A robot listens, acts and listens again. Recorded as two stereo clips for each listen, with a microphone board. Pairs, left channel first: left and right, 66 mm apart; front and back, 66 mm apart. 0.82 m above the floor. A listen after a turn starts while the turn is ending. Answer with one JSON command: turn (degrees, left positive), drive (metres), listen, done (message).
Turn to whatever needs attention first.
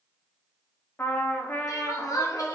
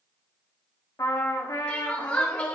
{"turn": 70}
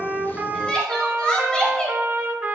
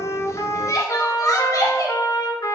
{"turn": 15}
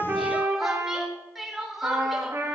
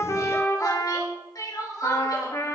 {"done": "Facing the crying."}